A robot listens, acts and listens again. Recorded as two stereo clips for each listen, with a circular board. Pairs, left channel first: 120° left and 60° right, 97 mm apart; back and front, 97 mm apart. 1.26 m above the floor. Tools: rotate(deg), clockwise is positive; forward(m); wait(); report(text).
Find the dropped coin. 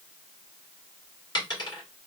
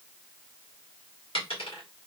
rotate(-160)
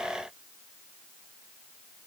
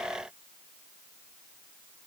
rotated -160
report("I heard a dropped coin from this way, but can't make it out now.")